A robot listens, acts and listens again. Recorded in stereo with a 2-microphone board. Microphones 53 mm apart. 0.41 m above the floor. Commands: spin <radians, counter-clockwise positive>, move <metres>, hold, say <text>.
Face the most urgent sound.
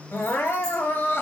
spin 0.87
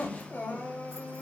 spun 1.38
spin 0.79
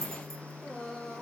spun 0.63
spin 0.17
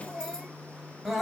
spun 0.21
say Facing the crying.